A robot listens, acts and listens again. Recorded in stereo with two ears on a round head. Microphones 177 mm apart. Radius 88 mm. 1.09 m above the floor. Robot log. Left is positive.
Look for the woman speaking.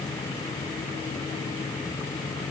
cmd idle
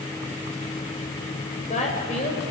note: The woman speaking: about 35° left or 145° left.
cmd yaw +35
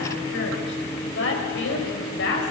note: So it is at 115° left.
cmd yaw +115
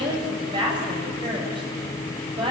note: The woman speaking is now 25° right.
cmd yaw -25
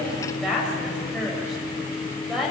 end: Facing the woman speaking.